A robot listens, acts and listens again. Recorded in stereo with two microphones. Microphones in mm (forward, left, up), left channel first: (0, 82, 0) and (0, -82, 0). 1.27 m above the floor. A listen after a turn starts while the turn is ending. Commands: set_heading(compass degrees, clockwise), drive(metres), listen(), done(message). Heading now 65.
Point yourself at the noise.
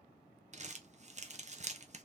set_heading(110)
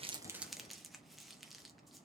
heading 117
done("Facing the crumpling.")